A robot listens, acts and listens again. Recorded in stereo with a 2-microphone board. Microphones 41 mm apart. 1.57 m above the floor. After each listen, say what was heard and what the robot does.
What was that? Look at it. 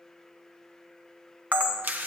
The camera shutter: about 45° right or 135° right. Turn 45° right.
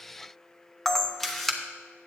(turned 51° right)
Found it: a camera shutter, straight ahead.